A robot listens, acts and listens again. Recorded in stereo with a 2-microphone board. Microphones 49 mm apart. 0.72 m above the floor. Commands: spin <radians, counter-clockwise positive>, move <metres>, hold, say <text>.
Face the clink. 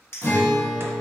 spin 0.96
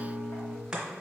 hold
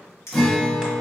spin 1.13
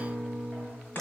hold
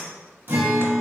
hold
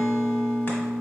say I heard a clink from this way, but can't make it out now.